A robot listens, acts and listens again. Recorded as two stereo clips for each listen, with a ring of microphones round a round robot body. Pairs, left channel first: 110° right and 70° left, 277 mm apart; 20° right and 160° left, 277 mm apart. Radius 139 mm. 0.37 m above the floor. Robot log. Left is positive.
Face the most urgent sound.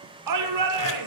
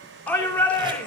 note: The shout: 60° left.
cmd yaw +60
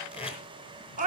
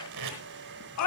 end: Found it: a shout, straight ahead.